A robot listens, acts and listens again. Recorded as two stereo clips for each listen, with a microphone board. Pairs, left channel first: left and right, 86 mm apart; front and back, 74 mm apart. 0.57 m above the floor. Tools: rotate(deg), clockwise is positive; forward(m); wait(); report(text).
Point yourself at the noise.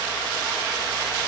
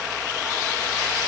wait()
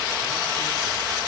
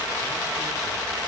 wait()
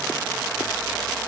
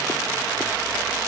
report("I can't make out anything to turn to.")